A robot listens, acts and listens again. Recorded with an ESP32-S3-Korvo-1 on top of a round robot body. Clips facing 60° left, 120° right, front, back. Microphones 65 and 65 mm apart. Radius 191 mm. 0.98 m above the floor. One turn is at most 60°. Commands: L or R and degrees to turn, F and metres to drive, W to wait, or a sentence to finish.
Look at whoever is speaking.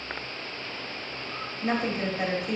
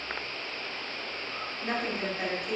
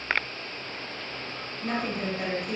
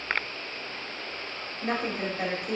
L60
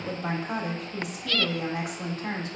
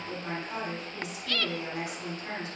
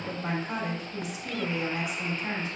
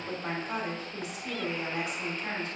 L60
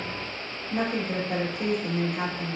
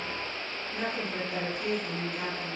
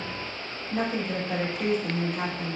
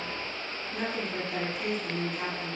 L40
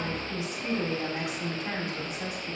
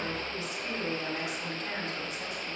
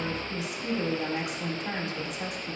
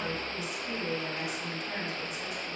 Facing the woman speaking.